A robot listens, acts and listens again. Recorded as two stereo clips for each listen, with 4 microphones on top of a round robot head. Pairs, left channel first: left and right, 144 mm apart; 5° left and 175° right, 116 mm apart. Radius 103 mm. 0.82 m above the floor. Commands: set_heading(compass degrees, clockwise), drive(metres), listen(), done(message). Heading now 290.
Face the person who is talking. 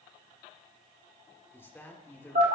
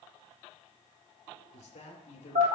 set_heading(275)
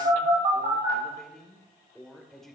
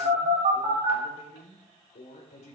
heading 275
done("Found it: a woman speaking, straight ahead, 2 to 4 m away.")